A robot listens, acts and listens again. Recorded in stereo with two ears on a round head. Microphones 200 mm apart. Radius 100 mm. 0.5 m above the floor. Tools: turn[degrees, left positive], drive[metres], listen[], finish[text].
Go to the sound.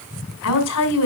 Thought: The woman speaking: about 75° left or 105° left.
Action: turn[75]
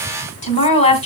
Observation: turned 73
Thought: So it is at 30° left.
Action: turn[30]
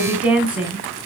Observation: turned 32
Action: drive[1.0]
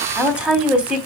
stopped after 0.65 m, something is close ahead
Action: finish[Something is in my way. I am facing the woman speaking but have not reached it.]